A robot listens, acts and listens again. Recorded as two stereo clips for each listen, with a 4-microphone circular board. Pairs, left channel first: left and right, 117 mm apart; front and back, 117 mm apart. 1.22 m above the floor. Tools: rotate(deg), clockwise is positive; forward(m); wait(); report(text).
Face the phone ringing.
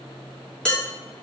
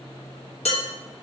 wait()
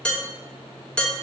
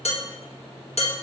wait()
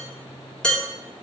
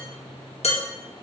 report("I can't make out a phone ringing to turn to.")